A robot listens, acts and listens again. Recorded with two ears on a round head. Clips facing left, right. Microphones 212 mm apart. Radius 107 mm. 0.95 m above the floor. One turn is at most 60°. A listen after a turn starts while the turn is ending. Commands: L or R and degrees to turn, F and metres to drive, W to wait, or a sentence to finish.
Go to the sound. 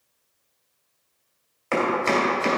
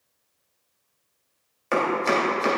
R30
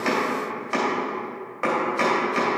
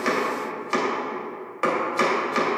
R60
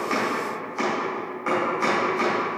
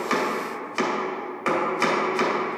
R60
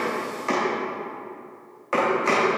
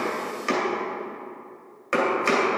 R20
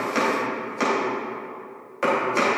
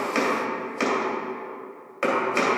F1.0
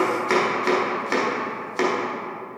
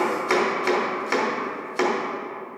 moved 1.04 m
F1.0
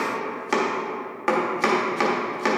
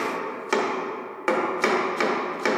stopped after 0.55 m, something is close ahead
I am next to the chopping.